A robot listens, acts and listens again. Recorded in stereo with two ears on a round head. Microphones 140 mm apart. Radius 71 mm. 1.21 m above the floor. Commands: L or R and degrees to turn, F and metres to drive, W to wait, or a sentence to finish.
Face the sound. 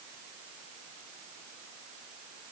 W
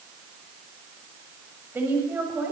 R30
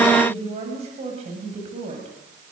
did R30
R135
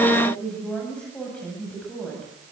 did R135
Found it: a woman speaking, straight ahead, over 4 m away.